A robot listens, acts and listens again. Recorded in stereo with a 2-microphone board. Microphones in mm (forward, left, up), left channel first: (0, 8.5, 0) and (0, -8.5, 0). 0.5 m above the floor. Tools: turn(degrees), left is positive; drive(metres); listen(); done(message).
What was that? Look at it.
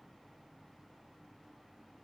listen()
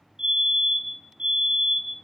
turn(degrees=-90)
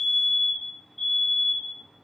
turn(degrees=10)
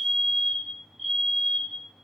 done("Found it: a fire alarm, straight ahead.")